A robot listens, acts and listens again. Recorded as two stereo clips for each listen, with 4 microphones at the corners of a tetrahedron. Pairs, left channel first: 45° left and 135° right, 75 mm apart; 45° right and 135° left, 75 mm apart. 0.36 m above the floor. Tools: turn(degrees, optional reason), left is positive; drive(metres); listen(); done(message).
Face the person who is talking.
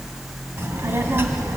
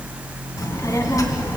turn(degrees=-80, reason="The child speaking: 80° right.")
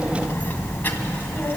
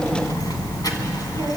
turn(degrees=-20, reason="The child speaking is now 20° right.")
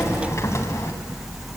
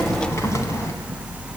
listen()
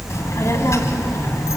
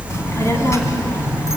done("Facing the child speaking.")